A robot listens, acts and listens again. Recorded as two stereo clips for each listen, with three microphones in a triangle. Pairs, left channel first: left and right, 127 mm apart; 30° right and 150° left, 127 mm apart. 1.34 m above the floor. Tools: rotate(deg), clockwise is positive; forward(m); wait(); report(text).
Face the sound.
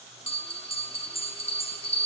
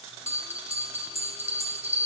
rotate(-120)
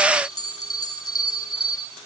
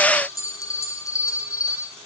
rotate(-30)
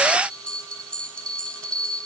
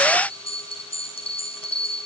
rotate(-10)
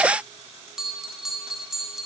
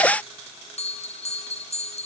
report("Facing the bell, 1 to 2 m away.")